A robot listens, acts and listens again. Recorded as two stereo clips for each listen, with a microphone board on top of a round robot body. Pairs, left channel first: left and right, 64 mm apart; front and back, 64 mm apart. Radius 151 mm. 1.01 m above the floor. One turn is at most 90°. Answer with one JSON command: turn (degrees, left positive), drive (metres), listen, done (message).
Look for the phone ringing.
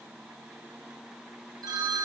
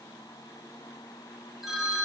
{"turn": -90}
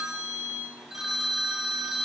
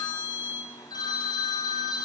{"done": "Facing the phone ringing, under 1 m away."}